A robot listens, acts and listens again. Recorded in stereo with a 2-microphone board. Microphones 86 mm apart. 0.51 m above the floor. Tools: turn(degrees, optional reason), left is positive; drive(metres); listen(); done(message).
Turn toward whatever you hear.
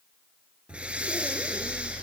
turn(degrees=-30)
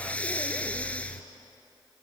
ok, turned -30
turn(degrees=15, reason="So it is at 15° left.")
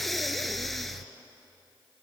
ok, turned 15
done("Found it: breathing, straight ahead.")